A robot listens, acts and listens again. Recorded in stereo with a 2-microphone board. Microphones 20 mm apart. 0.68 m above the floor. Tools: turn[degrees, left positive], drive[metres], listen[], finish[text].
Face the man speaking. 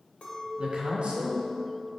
Thought: The man speaking: about 60° right or 120° right.
Action: turn[-60]
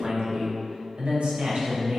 Thought: So it is at 75° right.
Action: turn[-75]
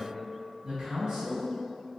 Thought: The man speaking is now 30° right.
Action: turn[-30]
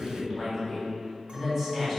Action: finish[Facing the man speaking, 2 to 4 m away.]